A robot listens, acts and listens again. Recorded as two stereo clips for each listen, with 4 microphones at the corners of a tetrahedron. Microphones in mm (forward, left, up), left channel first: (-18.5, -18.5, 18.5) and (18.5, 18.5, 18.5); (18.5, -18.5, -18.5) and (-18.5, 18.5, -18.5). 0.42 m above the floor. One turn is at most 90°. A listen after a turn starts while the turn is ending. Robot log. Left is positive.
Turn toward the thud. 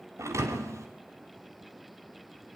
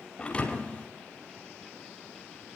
note: The thud: 25° left.
cmd yaw +25
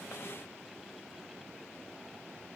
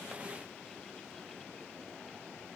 end: Facing where the thud came from. I can't hear it now.